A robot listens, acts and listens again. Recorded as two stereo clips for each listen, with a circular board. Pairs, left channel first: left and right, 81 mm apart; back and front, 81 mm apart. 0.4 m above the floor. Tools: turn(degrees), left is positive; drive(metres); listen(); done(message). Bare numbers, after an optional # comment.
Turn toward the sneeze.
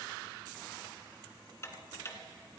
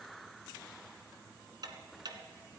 listen()
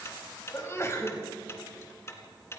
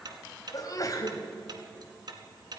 # The sneeze: 145° left.
turn(145)
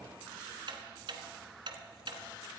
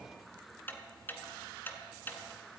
done("Facing where the sneeze came from. I can't hear it now.")